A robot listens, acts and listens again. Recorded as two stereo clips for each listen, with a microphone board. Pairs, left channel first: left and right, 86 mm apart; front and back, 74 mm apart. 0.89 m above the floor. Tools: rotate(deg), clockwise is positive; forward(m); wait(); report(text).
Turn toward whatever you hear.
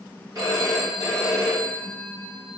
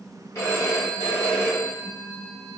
rotate(45)
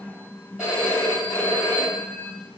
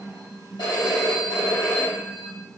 rotate(10)
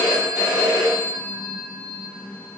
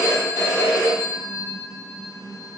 report("Found it: a phone ringing, straight ahead.")